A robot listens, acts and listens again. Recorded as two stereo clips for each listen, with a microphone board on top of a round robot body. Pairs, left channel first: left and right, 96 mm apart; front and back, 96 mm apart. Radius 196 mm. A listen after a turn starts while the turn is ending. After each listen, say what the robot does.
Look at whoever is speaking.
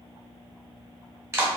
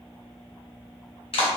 Keep listening.
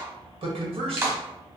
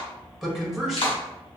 Turn 95° right.
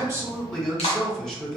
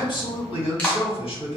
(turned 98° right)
Found it: a man speaking, straight ahead.